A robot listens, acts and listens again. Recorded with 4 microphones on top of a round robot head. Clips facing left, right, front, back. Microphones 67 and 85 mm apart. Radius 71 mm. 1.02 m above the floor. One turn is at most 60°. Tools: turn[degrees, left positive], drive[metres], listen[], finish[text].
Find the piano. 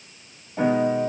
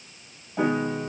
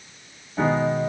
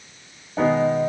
Thought: The piano: straight behind.
Action: turn[60]
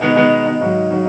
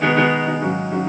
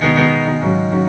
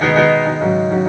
Thought: The piano is now 130° left.
Action: turn[60]
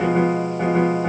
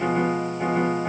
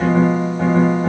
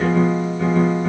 Thought: The piano is now 55° left.
Action: turn[55]
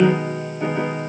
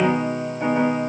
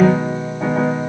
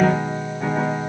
Thought: The piano is now 10° right.
Action: turn[-10]
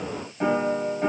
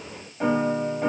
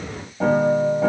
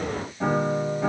Action: finish[Facing the piano, 2 to 4 m away.]